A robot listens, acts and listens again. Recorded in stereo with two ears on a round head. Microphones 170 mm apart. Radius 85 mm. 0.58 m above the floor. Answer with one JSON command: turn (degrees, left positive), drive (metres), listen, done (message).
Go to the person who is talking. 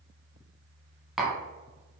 {"listen": true}
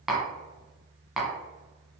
{"listen": true}
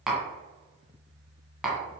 {"done": "I can't make out anyone speaking, only tapping."}